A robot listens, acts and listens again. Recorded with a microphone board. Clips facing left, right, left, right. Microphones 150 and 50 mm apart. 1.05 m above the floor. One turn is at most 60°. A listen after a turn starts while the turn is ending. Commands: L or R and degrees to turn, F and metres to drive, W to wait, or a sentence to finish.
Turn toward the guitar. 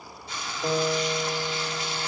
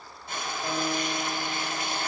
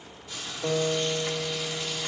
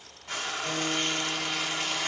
L35
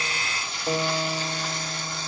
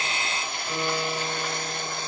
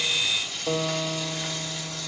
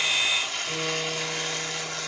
L60
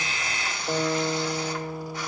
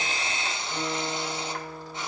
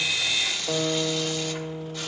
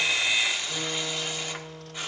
L60
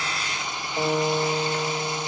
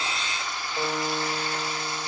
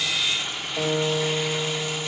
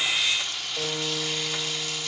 L10
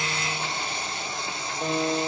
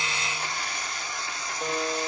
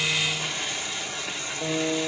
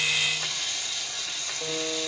Facing the guitar.